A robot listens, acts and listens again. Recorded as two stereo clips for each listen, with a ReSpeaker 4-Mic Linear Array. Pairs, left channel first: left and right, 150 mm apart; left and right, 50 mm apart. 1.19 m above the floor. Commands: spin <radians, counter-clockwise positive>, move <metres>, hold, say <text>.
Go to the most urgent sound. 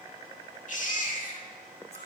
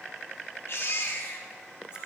spin 1.05
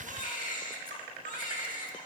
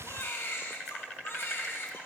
spin 1.05
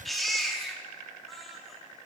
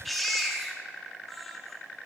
move 1.0
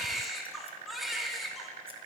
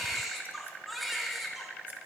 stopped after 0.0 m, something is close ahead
say Blocked. The baby crying is further on, straight ahead.